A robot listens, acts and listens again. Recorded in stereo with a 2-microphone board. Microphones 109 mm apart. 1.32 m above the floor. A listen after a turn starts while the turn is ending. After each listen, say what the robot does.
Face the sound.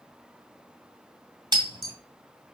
Turn 45° right.
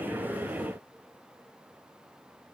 Keep listening.
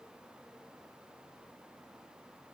I heard breaking glass, but can't make it out now. It was about straight ahead or 90° right.